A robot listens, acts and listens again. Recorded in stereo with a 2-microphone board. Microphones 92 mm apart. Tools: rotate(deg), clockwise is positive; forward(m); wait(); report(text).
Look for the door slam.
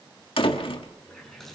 rotate(-90)
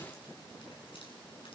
report("I heard a door slam from this way, but can't make it out now.")